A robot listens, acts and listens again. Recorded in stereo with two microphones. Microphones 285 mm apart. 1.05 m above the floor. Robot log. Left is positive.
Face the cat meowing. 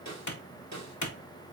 cmd idle
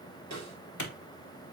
cmd idle
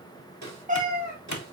note: The cat meowing: about 30° right or 150° right.
cmd yaw -30
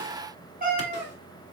note: The cat meowing: about 35° right or 145° right.
cmd yaw -35
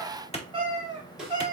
note: So it is at 15° right.
cmd yaw -15
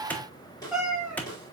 end: Found it: a cat meowing, straight ahead.